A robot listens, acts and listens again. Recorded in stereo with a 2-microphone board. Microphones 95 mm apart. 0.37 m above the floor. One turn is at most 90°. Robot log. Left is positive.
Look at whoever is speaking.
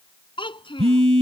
note: The child speaking: about 60° left or 120° left.
cmd yaw +60
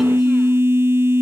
cmd idle
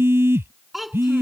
end: Found it: a child speaking, straight ahead.